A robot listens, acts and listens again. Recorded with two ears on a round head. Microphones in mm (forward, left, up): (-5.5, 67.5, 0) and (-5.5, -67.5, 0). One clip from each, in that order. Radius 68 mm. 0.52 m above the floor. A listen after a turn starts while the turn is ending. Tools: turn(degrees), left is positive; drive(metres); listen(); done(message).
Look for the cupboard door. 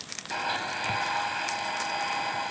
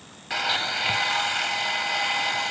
listen()
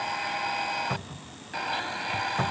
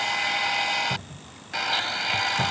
turn(degrees=55)
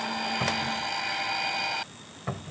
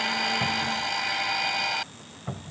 turn(degrees=65)
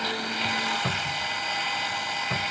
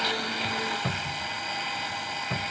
turn(degrees=20)
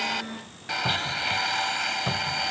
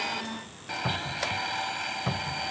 done("Facing the cupboard door.")